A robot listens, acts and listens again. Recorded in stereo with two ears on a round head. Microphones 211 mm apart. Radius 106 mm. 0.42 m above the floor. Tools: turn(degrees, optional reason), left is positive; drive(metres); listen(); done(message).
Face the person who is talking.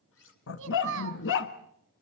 turn(degrees=-55, reason="The child speaking: about 55° right or 125° right.")
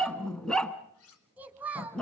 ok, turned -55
done("Found it: a child speaking, straight ahead.")